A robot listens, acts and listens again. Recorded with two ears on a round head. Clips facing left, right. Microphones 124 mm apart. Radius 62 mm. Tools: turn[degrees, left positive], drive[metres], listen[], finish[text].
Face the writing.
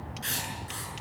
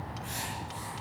Action: turn[90]
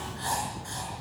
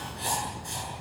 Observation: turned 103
Thought: So it is at 15° right.
Action: turn[-15]
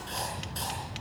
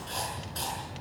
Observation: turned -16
Action: finish[Facing the writing, over 4 m away.]